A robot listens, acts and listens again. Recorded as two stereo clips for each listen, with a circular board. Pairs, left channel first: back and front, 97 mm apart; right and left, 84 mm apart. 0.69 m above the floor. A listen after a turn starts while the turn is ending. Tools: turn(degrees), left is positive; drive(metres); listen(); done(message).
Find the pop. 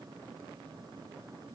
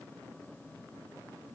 listen()
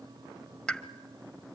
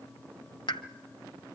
turn(degrees=-100)
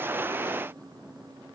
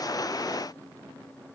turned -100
done("I heard a pop from this way, but can't make it out now.")